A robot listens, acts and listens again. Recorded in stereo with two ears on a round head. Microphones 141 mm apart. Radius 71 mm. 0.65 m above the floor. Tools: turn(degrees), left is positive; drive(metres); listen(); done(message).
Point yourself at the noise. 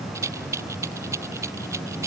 turn(degrees=-20)
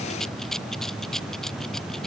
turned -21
done("Facing the rattle.")